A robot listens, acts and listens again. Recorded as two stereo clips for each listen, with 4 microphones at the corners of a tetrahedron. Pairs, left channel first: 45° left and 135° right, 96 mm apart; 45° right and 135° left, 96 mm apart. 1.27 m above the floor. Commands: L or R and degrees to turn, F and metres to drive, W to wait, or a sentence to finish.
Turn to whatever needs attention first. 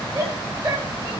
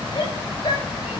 R85
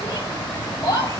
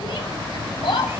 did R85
R15
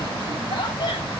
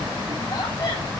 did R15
W
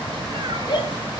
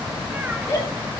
Found it: a shout, straight ahead, over 4 m away.